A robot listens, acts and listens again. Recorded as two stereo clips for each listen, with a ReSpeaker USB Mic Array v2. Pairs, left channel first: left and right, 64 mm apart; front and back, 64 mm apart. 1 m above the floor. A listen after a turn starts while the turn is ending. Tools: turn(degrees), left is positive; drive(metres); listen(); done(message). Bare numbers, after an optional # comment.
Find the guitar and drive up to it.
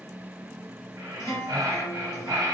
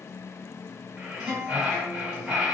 # The guitar: 110° left.
turn(110)
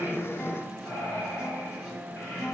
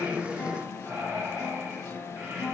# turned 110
drive(1.0)
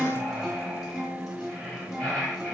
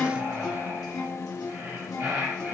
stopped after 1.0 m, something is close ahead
done("I am next to the guitar.")